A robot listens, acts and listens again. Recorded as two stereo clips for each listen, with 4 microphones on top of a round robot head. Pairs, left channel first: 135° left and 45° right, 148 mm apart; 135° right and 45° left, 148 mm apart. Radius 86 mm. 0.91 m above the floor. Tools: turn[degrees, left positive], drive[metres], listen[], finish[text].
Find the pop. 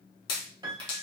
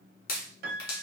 Thought: The pop: 165° right.
Action: turn[-165]
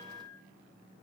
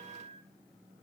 Action: finish[I heard a pop from this way, but can't make it out now.]